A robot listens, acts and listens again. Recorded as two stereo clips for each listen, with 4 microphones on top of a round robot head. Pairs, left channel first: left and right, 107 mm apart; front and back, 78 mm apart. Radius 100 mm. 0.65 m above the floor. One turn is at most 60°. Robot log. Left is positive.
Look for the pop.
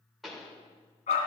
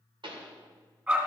note: The pop: straight behind.
cmd yaw +60
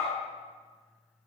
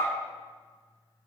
note: Nothing new. It was at 120° left.
cmd yaw +60
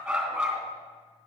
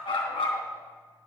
note: Nothing new. It was at 60° left.
cmd yaw +60
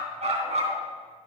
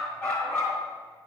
end: Facing where the pop came from. I can't hear it now.